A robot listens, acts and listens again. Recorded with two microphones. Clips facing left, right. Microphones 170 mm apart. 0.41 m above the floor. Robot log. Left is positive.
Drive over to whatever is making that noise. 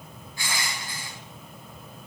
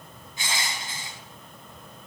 note: The crushing: about 20° right or 160° right.
cmd yaw -20
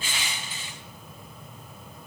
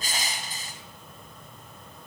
note: So it is at 140° right.
cmd yaw -140
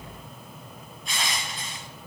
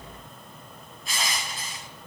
cmd fwd 1.0
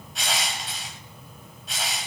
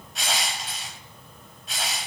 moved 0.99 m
cmd fwd 1.0
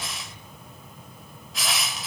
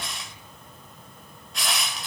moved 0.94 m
cmd fwd 1.0
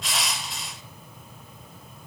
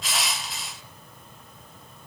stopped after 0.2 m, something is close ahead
end: I am next to the crushing.